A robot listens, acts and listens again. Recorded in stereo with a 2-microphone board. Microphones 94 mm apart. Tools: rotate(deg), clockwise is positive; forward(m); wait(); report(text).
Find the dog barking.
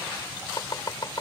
wait()
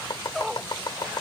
rotate(-30)
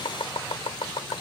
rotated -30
wait()
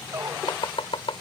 rotate(30)
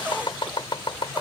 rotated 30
rotate(10)
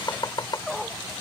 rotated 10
report("Found it: a dog barking, straight ahead.")